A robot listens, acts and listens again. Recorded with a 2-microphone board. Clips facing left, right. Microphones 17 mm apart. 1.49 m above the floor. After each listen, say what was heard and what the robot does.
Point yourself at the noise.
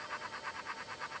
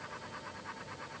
Keep listening.
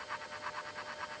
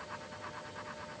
Keep listening.
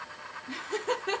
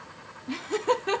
Turn 30° right.
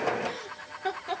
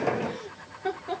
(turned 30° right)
So it is at 35° left. Turn 35° left.
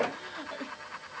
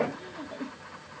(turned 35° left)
The laughter is now 40° left. Turn 40° left.
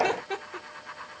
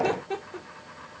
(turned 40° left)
The laughter is now 20° left. Turn 20° left.
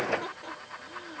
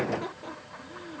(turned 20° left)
Found it: laughter, straight ahead.